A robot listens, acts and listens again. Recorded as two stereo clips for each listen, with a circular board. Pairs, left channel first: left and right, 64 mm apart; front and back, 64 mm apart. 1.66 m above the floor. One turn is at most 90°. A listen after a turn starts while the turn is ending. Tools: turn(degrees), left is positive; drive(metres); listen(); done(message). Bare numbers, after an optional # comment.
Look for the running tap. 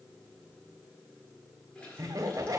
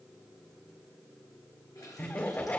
# The running tap: 20° left.
turn(20)
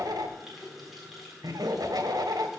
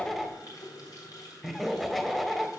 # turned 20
done("Facing the running tap, 2 to 4 m away.")